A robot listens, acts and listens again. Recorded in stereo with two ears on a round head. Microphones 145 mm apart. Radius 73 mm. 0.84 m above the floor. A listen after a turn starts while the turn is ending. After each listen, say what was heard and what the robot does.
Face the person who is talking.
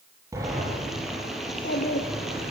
The child speaking: about 55° left or 125° left. Turn 55° left.
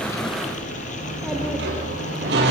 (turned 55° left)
Keep listening.
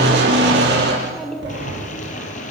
Facing the child speaking.